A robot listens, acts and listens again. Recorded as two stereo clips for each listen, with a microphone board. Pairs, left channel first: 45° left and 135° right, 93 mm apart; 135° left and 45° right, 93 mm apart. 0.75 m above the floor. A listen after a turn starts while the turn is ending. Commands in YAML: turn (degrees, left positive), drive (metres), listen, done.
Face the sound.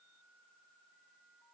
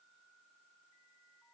listen: true
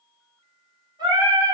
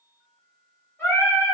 turn: -165
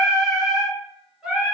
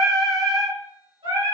turn: -55
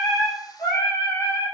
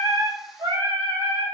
turn: -10
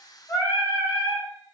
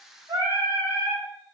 done: "Found it: singing, straight ahead, 2 to 4 m away."